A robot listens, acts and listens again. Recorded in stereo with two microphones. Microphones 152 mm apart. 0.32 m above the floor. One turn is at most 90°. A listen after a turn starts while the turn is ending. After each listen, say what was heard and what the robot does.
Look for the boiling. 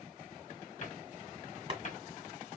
The boiling: about 35° right or 145° right. Turn 35° right.
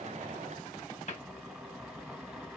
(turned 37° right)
Facing the boiling.